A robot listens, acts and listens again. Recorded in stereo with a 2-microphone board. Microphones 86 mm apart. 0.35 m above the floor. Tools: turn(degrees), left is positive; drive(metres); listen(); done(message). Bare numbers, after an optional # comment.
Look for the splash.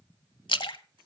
# The splash: about 65° left or 115° left.
turn(65)
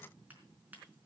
listen()
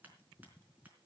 done("I heard a splash, but can't make it out now. It was about straight ahead or 50° left.")